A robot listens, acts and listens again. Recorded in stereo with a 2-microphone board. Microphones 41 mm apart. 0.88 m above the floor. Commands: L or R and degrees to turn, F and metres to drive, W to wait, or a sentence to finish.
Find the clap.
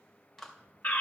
L30
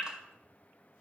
W
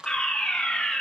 R20
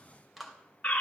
Found it: a clap, straight ahead, 2 to 4 m away.